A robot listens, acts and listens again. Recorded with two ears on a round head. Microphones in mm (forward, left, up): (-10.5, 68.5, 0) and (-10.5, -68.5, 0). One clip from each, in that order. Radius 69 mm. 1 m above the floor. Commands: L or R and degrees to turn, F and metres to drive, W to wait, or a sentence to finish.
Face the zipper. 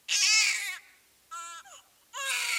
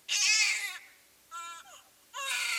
W
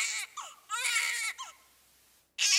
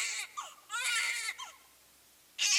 W
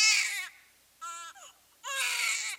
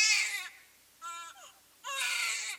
I can't make out a zipper to turn to.